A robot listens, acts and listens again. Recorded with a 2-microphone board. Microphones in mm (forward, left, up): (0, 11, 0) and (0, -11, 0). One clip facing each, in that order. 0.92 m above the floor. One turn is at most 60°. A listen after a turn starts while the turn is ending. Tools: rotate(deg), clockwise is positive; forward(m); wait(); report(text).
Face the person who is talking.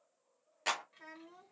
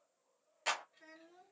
rotate(-60)
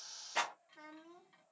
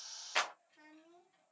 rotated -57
rotate(-55)
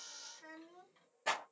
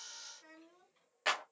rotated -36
rotate(-20)
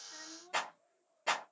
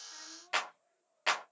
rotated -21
report("Found it: a child speaking, straight ahead.")